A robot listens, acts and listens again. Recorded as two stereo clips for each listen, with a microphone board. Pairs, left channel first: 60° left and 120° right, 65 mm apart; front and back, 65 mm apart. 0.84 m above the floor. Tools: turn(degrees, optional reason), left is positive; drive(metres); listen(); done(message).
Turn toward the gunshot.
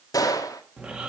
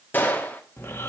turn(degrees=60, reason="The gunshot: 60° left.")
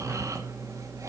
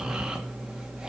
done("I heard a gunshot from this way, but can't make it out now.")